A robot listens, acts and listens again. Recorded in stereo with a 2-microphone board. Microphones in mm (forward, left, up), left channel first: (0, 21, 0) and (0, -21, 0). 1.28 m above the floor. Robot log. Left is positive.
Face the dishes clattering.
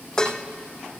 note: The dishes clattering: about 15° left or 165° left.
cmd yaw +15
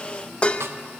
note: So it is at 150° left.
cmd yaw +150
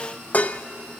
note: The dishes clattering is now 40° left.
cmd yaw +40
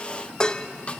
note: The dishes clattering is now 20° left.
cmd yaw +20
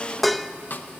end: Found it: dishes clattering, straight ahead.